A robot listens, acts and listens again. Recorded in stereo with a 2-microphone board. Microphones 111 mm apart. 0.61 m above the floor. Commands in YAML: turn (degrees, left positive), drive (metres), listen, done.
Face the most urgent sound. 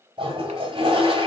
listen: true
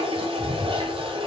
listen: true
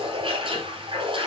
done: "I can't make out anything urgent, only a toilet flushing."